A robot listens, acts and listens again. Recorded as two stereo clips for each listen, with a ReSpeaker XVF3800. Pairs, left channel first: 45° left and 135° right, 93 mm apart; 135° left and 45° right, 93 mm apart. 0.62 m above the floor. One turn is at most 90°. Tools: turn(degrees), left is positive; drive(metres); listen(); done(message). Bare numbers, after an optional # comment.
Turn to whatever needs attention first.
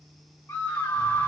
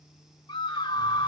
# The scream: 115° left.
turn(90)
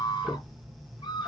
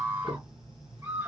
# The scream is now 20° left.
turn(20)
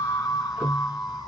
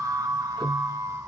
# The scream is now 10° left.
turn(10)
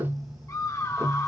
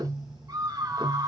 done("Found it: a scream, straight ahead.")